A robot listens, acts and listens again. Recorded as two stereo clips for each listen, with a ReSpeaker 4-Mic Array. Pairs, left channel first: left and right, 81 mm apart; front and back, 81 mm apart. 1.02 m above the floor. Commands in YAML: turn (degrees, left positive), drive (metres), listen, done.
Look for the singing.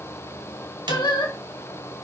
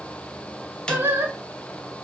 turn: 115
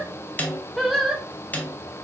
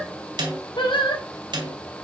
done: "Facing the singing, 2 to 4 m away."